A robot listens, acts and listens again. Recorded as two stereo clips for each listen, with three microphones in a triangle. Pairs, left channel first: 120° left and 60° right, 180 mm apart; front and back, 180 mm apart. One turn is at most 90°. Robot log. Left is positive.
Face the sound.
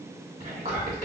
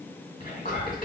note: The whispering: 25° right.
cmd yaw -25
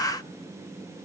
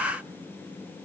cmd idle
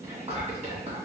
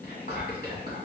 note: The whispering is now 15° right.
cmd yaw -15
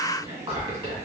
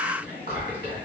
end: Found it: whispering, straight ahead.